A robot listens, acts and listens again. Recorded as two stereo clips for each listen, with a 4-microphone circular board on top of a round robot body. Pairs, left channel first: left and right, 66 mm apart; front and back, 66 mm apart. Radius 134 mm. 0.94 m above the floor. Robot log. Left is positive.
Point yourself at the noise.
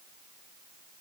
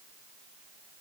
cmd idle
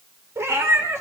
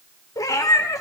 note: The cat meowing: 40° right.
cmd yaw -40
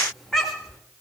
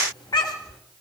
end: Found it: a cat meowing, straight ahead, 1 to 2 m away.